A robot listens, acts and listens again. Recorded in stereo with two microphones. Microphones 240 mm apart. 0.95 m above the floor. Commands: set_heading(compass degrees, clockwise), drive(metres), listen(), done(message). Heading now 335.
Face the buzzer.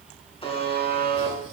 set_heading(310)
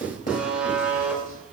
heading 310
done("Facing the buzzer, 2 to 4 m away.")